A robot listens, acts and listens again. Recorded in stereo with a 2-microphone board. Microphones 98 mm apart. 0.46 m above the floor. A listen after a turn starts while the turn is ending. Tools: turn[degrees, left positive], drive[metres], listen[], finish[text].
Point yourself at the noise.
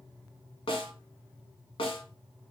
Thought: The snare drum: about 70° left or 110° left.
Action: turn[70]
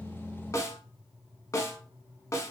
Thought: So it is at 35° left.
Action: turn[35]
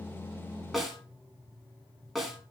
Action: finish[Found it: a snare drum, straight ahead.]